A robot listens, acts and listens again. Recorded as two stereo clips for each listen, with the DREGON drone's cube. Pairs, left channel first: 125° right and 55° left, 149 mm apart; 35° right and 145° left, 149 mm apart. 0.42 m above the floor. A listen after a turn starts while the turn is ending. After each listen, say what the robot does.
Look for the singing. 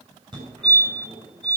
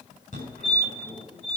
Keep listening.
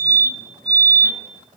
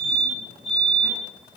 Keep listening.
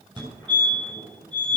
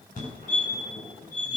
I can't make out singing, only a fire alarm.